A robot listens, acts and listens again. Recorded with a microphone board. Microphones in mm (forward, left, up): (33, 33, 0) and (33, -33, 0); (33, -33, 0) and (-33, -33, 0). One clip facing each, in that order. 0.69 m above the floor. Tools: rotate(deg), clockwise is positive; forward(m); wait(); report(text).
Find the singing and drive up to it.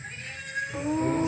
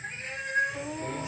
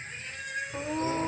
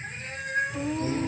rotate(-55)
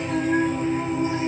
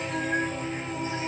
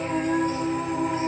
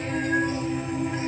rotate(-20)
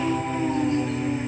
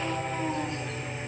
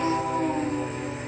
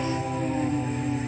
forward(1.0)
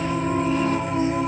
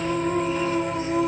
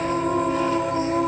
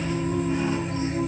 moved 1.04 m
rotate(-10)
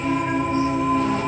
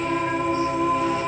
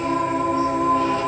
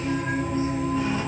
forward(1.0)
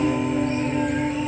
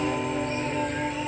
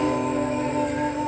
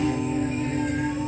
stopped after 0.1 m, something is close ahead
report("Arrived at the singing, straight ahead.")